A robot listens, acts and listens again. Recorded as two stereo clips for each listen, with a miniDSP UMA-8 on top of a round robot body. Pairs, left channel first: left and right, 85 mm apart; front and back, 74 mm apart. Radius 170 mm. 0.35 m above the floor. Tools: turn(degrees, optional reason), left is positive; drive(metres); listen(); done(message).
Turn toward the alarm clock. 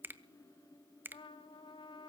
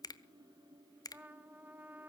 listen()
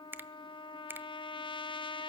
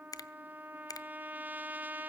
listen()
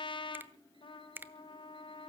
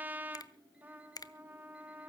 done("I can't make out an alarm clock, only a trumpet and a finger snap.")